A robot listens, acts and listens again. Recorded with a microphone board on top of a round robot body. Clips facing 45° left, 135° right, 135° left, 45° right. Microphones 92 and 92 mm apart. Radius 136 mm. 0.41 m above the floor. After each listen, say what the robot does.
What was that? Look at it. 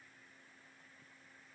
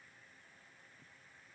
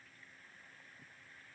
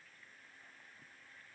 Keep listening.
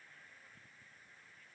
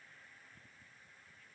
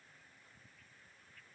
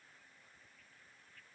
Keep listening.
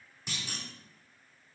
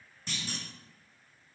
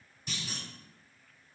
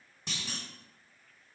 Turn 35° right.
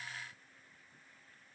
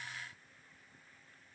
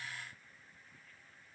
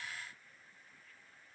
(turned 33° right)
I heard a clunk from this way, but can't make it out now.